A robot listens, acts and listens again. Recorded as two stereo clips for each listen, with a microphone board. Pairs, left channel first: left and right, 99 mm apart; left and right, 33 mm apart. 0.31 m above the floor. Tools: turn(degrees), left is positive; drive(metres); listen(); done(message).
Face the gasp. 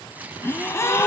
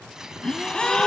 turn(degrees=30)
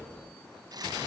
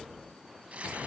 listen()
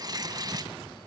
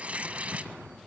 done("I heard a gasp, but can't make it out now. It was about straight ahead or 120° left.")